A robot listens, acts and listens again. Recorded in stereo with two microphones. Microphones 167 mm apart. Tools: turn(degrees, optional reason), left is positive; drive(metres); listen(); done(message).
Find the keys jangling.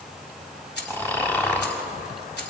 turn(degrees=90)
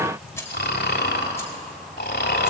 listen()
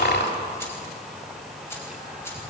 listen()
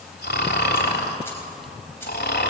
done("Facing where the keys jangling came from. I can't hear it now.")